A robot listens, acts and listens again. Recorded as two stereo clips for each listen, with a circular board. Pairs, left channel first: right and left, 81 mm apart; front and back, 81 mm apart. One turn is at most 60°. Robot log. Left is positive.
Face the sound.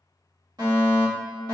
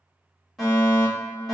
note: The fire alarm: 85° left.
cmd yaw +60
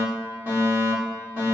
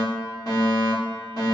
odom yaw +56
note: The fire alarm is now 30° left.
cmd yaw +30
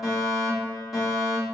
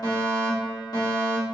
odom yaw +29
end: Facing the fire alarm.